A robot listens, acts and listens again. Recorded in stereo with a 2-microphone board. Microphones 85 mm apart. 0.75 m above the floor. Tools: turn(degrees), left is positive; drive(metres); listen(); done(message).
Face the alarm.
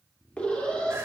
turn(degrees=30)
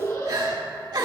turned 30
turn(degrees=135)
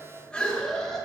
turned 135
turn(degrees=10)
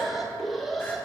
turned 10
done("Found it: an alarm, straight ahead, 2 to 4 m away.")